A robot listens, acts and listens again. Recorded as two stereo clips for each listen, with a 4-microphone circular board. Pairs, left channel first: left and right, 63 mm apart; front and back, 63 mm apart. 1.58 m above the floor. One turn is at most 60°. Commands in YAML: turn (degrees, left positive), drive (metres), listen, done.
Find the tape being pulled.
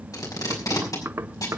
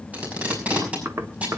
turn: 60
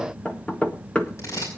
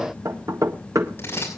turn: 50
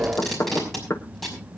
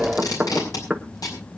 done: "Found it: tape being pulled, straight ahead, over 4 m away."